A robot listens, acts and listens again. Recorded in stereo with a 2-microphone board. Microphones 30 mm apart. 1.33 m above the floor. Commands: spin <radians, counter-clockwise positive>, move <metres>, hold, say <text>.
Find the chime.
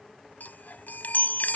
spin 1.22
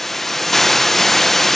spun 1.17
hold
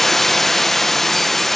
hold
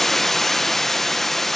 say I heard a chime, but can't make it out now. It was about straight ahead or 45° left.